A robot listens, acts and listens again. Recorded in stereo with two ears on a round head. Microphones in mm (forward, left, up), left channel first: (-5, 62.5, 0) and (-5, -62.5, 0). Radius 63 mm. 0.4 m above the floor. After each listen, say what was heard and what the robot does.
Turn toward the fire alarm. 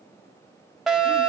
Turn 30° left.
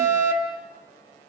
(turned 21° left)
So it is at 25° right. Turn 25° right.
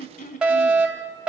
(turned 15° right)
The fire alarm is now 10° right. Turn 10° right.
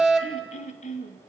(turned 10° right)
Found it: a fire alarm, straight ahead.